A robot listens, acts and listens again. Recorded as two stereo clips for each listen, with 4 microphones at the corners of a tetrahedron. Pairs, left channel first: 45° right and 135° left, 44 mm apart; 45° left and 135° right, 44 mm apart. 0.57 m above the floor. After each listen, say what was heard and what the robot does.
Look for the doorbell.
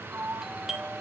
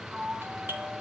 The doorbell: 150° right. Turn 150° right.
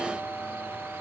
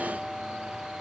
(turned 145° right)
Found it: a doorbell, straight ahead.